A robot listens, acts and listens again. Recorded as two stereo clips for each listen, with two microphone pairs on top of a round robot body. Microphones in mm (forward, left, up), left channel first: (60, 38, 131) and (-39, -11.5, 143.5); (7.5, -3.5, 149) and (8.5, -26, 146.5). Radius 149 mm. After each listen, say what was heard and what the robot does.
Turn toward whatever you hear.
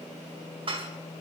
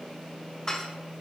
The dishes clattering: 165° left. Turn 165° left.
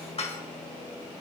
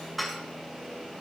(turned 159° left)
Facing the dishes clattering.